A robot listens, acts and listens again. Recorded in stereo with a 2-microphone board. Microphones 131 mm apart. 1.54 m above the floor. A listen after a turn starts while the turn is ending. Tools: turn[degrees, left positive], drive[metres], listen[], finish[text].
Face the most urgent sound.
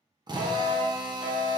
Thought: The fire alarm: about 55° left or 125° left.
Action: turn[55]
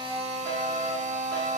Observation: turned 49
Thought: So it is at 20° left.
Action: turn[20]
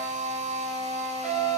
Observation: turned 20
Action: finish[Facing the fire alarm.]